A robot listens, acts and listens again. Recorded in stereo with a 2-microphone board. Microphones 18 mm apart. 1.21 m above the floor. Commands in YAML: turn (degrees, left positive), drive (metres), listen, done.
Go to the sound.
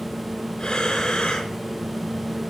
turn: 45
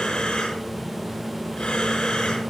turn: 85
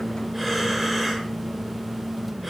drive: 1.0
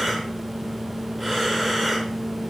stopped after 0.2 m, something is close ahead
done: "Blocked. The breathing is further on, straight ahead."